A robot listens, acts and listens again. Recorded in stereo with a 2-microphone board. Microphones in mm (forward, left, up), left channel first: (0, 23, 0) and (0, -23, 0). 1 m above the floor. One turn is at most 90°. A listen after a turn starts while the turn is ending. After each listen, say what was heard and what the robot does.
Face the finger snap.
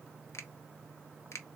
Turn 90° left.
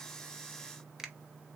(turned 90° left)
So it is at 10° right. Turn 10° right.
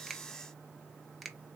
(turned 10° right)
Found it: a finger snap, straight ahead, under 1 m away.